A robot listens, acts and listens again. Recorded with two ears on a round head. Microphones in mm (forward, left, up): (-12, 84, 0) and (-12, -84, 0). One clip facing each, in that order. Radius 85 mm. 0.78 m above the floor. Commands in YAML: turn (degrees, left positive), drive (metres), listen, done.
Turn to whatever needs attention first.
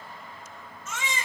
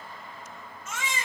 turn: 90
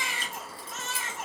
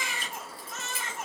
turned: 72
turn: 15
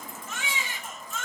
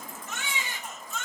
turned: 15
done: "Facing the baby crying."